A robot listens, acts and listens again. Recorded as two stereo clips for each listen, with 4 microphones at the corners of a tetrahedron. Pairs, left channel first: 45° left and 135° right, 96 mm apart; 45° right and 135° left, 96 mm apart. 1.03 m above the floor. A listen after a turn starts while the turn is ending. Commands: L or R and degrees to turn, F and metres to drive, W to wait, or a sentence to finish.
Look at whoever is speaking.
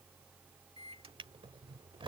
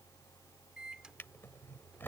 W
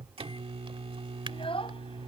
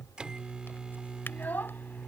L25
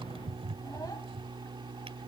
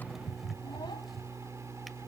W
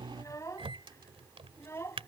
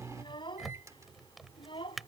R15
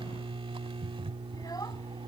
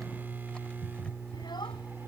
W
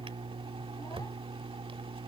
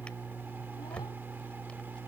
W
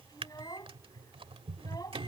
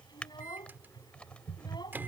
Facing the child speaking.